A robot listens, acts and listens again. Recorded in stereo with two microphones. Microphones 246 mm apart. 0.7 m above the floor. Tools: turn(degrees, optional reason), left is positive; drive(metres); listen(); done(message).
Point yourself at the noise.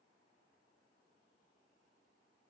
listen()
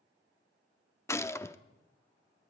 turn(degrees=30)
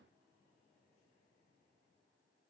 listen()
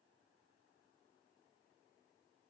done("I heard a gunshot, but can't make it out now. It was about 20° right or 140° left.")